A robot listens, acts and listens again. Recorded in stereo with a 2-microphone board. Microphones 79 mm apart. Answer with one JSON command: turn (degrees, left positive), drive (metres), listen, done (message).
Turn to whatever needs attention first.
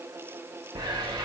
{"listen": true}
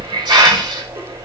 {"listen": true}
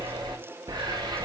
{"done": "I can't make out anything urgent to turn to."}